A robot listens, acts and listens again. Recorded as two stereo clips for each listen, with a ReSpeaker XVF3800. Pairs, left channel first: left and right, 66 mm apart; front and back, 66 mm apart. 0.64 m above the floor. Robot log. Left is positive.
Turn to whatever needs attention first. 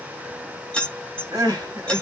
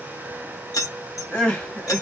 note: The crying: 75° right.
cmd yaw -75
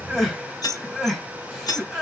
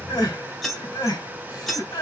end: Facing the crying.